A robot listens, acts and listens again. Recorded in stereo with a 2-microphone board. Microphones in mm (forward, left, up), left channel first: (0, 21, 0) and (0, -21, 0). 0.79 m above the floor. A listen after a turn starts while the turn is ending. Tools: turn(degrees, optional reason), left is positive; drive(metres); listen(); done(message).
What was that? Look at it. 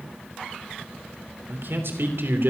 turn(degrees=-70, reason="The man speaking: about 70° right or 110° right.")
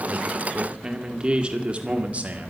turn(degrees=-40, reason="So it is at 40° right.")
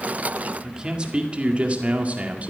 turn(degrees=-35, reason="The man speaking is now 35° right.")
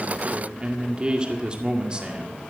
turn(degrees=-25, reason="The man speaking is now 25° right.")
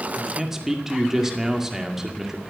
turn(degrees=-10, reason="The man speaking is now 10° right.")
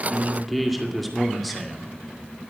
done("Facing the man speaking, 2 to 4 m away.")